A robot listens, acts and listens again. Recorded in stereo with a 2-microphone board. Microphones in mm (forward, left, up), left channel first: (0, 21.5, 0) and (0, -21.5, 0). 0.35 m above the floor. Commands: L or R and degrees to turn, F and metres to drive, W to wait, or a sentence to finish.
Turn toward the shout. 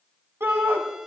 R60
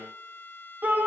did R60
R45
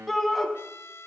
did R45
Facing the shout, 2 to 4 m away.